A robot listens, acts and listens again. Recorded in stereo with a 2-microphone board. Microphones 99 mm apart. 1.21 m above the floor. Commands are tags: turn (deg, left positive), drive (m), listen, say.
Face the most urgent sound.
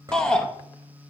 <turn deg="30"/>
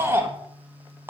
<turn deg="-20"/>
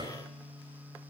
<listen/>
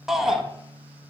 <say>Facing the shout, 1 to 2 m away.</say>